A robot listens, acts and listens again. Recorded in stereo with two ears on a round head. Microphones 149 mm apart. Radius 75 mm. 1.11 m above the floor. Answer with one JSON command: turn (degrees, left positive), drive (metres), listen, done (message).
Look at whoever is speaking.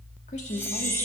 {"turn": 40}
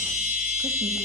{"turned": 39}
{"listen": true}
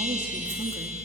{"listen": true}
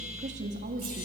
{"turn": -50}
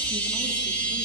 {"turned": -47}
{"listen": true}
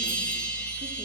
{"listen": true}
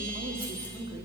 {"turn": -30}
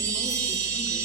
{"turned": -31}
{"listen": true}
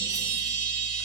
{"listen": true}
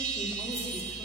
{"done": "Facing where the woman speaking came from. I can't hear it now."}